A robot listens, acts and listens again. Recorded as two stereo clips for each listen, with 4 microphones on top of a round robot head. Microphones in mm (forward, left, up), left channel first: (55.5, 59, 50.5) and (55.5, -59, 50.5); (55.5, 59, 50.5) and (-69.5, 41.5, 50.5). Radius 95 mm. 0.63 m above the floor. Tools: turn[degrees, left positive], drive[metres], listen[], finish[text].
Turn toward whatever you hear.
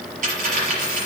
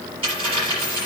Thought: The dropped coin: 110° right.
Action: turn[-110]
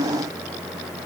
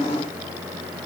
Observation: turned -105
Action: finish[I heard a dropped coin from this way, but can't make it out now.]